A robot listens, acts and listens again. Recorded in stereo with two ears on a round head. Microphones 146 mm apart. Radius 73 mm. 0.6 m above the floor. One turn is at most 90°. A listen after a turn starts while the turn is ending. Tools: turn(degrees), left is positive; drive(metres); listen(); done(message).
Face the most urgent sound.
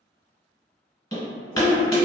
turn(degrees=55)
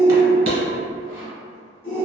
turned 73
turn(degrees=15)
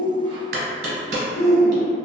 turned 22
done("Found it: a shout, straight ahead.")